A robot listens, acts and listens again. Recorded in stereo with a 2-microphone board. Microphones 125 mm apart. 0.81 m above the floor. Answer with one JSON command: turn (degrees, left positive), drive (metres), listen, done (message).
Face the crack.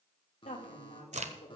{"turn": -70}
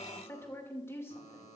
{"listen": true}
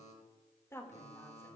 {"done": "I heard a crack, but can't make it out now. It was about straight ahead or 40° right."}